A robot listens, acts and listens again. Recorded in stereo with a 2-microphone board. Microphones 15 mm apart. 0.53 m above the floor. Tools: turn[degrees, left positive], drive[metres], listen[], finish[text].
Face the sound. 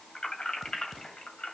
Thought: The keys jangling: about 70° left or 110° left.
Action: turn[70]
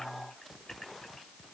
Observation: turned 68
Thought: So it is at 50° left.
Action: turn[50]
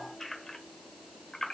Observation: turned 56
Thought: The keys jangling is now 40° left.
Action: turn[40]
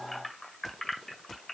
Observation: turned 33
Thought: The keys jangling is now 15° left.
Action: turn[15]
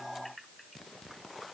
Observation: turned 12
Action: finish[Found it: keys jangling, straight ahead, 1 to 2 m away.]